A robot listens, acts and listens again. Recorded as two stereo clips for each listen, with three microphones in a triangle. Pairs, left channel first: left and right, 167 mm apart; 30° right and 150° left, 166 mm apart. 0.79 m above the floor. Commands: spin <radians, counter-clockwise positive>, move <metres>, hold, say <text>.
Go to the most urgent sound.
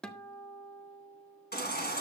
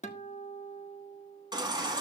spin 1.48
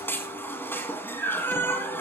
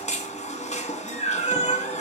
spin 0.26
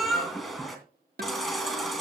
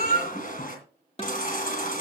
move 1.0
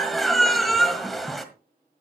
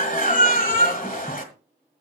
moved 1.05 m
move 1.0
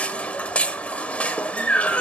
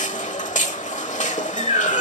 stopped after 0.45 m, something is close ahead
spin 0.17
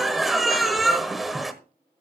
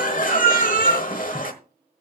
say I am next to the baby crying.